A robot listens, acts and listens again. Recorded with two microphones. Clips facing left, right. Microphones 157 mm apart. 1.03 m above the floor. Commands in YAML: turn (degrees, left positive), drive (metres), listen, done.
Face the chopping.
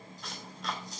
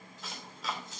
turn: 30
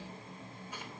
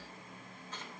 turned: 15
listen: true
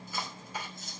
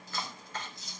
turn: 170
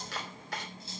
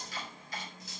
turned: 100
turn: 70
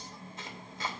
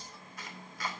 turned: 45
turn: 25
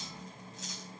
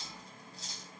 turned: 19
listen: true
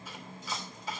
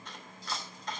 done: "Found it: chopping, straight ahead."